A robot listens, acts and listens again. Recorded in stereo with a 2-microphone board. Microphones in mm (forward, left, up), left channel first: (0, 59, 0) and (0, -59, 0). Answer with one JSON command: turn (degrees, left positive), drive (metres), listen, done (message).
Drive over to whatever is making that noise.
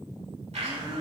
{"turn": -70}
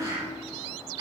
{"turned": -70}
{"turn": -40}
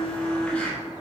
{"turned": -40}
{"turn": 10}
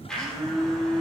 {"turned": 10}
{"drive": 1.0}
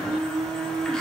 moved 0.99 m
{"turn": 10}
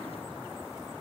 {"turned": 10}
{"listen": true}
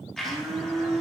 {"drive": 1.0}
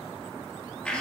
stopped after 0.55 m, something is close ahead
{"turn": 10}
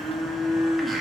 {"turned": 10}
{"done": "Arrived at the blender, straight ahead."}